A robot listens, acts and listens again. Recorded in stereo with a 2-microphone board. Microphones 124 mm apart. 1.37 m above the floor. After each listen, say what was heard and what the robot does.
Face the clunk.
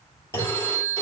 The clunk: about 20° left or 160° left. Turn 20° left.
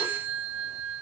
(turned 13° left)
Keep listening.
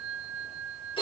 I heard a clunk, but can't make it out now. It was about 5° left or 145° left.